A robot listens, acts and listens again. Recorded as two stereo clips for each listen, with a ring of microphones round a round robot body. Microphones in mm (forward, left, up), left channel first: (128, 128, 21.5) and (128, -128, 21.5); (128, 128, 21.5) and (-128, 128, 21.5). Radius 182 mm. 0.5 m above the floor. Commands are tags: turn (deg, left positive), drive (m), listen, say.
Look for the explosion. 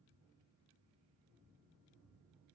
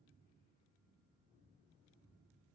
<listen/>
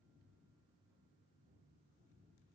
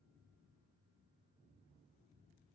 <listen/>
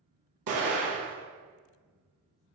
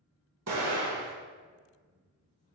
<turn deg="-130"/>
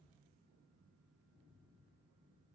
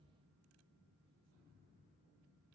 <say>Facing where the explosion came from. I can't hear it now.</say>